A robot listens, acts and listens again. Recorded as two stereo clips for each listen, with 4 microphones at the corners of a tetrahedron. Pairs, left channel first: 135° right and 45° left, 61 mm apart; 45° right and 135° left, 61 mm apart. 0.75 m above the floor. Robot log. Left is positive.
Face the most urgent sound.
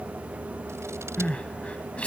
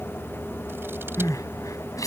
note: The crying: 65° right.
cmd yaw -65
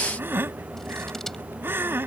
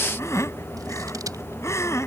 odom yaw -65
end: Facing the crying.